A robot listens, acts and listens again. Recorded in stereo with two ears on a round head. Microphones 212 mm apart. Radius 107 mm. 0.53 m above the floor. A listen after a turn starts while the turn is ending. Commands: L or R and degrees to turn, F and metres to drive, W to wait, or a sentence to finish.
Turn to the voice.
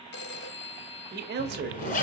R45
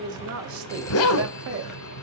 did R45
R80
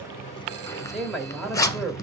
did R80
Found it: a man speaking, straight ahead.